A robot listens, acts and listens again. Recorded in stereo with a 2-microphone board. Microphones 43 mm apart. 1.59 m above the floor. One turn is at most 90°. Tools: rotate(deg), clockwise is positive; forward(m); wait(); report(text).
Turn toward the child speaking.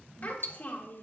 rotate(-50)
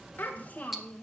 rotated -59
rotate(-25)
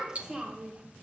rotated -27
rotate(30)
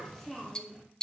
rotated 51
report("Found it: a child speaking, straight ahead, 1 to 2 m away.")